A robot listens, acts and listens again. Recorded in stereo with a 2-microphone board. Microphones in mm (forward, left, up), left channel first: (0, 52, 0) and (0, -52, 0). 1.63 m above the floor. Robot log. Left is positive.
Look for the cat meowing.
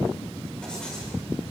cmd idle
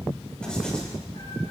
note: The cat meowing: about 60° left or 120° left.
cmd yaw +60
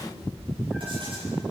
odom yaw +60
end: Facing the cat meowing.